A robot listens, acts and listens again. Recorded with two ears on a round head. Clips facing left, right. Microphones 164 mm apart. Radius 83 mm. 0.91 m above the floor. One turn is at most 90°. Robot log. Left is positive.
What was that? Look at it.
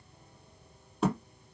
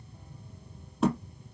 cmd yaw +30
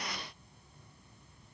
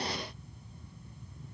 cmd idle
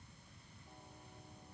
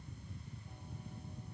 end: I heard a thud, but can't make it out now. It was about 30° right or 150° left.